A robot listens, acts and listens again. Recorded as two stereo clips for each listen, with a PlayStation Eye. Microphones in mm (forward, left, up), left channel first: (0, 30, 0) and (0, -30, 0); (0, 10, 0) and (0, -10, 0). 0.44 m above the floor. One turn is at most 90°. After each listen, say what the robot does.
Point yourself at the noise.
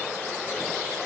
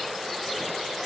Keep listening.
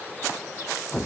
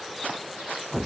Keep listening.
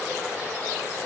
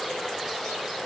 I can't make out anything.